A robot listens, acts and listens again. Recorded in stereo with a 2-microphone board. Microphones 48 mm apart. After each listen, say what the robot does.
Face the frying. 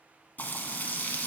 Turn 35° left.
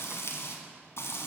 Turn 105° left.
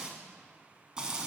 Turn 20° right.
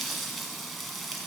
Facing the frying.